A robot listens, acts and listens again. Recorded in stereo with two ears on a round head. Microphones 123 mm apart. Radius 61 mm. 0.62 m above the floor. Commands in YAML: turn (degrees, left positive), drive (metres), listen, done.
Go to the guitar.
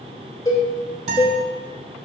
turn: -45
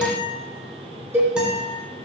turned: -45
drive: 1.0
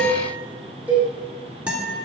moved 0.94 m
turn: -10
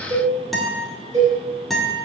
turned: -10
drive: 1.0
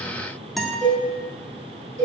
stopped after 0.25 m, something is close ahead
done: "I am next to the guitar."